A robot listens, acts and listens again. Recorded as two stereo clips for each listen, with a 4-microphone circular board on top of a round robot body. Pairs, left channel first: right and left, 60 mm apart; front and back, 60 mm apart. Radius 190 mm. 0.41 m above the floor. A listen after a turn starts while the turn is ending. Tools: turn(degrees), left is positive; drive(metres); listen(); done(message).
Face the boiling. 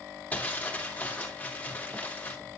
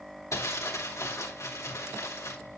listen()
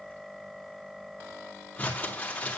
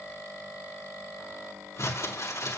listen()
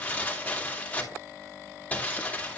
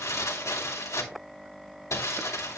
done("I can't make out boiling to turn to.")